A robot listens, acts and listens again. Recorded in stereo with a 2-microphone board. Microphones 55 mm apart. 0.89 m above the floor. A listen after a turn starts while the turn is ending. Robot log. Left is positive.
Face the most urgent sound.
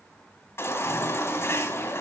note: The baby crying: about 50° left or 130° left.
cmd yaw +50
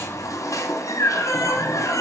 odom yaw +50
note: So it is at 80° left.
cmd yaw +80
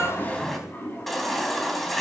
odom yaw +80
end: Found it: a baby crying, straight ahead, 2 to 4 m away.